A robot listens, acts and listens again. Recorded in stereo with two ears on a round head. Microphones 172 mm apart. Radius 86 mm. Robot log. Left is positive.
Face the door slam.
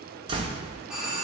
note: The door slam: about 25° right or 155° right.
cmd yaw -25
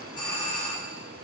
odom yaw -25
cmd idle
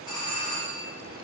end: I heard a door slam, but can't make it out now. It was about straight ahead or 130° right.